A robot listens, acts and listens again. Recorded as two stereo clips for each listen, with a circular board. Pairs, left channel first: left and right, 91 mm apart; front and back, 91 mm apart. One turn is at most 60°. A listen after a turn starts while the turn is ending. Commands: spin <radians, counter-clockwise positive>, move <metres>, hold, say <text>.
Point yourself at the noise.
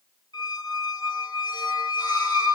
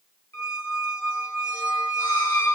spin 1.05
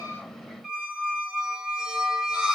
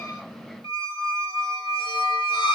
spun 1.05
say Facing the squeak, 1 to 2 m away.